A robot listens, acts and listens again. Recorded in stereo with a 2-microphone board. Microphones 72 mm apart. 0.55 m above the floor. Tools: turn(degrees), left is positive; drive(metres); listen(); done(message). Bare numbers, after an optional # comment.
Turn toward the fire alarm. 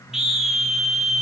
listen()
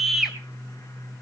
listen()
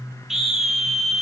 done("I can't make out a fire alarm to turn to.")